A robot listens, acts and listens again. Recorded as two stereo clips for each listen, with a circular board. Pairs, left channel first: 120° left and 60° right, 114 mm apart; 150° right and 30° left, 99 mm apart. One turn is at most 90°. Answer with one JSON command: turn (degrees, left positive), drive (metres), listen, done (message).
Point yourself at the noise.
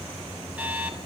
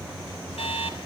{"turn": -90}
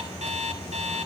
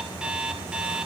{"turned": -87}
{"turn": -50}
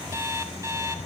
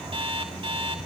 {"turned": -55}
{"done": "Facing the alarm clock, over 4 m away."}